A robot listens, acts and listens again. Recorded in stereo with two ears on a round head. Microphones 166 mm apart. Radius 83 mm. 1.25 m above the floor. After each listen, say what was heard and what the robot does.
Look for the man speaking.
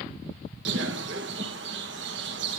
Keep listening.
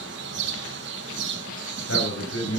The man speaking: about 70° left or 110° left. Turn 70° left.
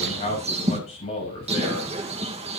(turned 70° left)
So it is at 35° left. Turn 35° left.
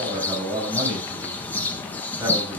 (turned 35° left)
The man speaking is now 15° right. Turn 15° right.
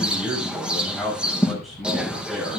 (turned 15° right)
Facing the man speaking.